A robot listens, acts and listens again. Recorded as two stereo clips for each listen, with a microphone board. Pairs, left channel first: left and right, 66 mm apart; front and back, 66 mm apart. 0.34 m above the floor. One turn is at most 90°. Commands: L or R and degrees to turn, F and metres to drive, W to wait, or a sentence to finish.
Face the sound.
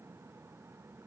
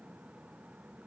W
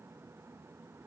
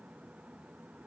W
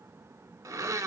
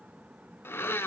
R55
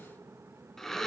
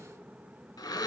Facing the blender, under 1 m away.